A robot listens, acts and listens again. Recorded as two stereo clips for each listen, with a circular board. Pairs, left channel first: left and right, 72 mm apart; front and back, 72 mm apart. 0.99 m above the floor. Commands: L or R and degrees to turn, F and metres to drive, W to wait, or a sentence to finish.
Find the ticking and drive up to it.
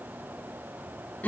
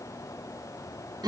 W
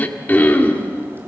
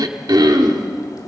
W
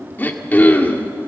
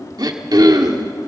I can't make out ticking to turn to.